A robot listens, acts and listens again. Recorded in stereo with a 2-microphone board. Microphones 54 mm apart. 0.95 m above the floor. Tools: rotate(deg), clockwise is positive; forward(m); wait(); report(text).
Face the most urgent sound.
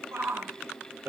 rotate(60)
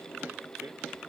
wait()
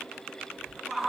report("Found it: a shout, straight ahead, 2 to 4 m away.")